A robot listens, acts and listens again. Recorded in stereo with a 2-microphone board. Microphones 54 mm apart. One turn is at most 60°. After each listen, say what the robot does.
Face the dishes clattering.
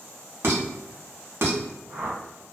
Turn 50° right.
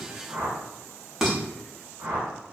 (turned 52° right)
Facing the dishes clattering, under 1 m away.